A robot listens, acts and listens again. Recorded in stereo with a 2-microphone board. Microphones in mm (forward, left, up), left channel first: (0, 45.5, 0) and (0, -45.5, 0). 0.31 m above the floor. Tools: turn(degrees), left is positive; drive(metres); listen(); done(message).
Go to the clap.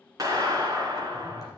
turn(degrees=-40)
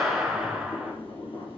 drive(metres=1.0)
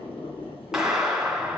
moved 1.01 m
drive(metres=1.0)
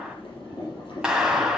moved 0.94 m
turn(degrees=-10)
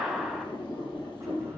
drive(metres=1.0)
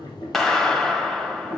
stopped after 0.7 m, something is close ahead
done("Arrived at the clap, straight ahead.")